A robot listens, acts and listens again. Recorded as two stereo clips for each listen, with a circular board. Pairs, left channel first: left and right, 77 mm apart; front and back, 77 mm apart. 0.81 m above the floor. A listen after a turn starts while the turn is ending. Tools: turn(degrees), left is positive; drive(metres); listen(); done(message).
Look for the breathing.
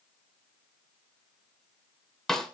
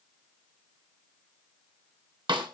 listen()
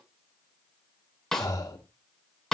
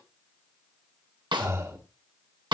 turn(degrees=130)
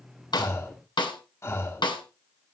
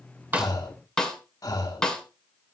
turn(degrees=40)
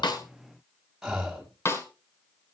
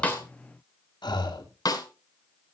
done("Found it: breathing, straight ahead, 1 to 2 m away.")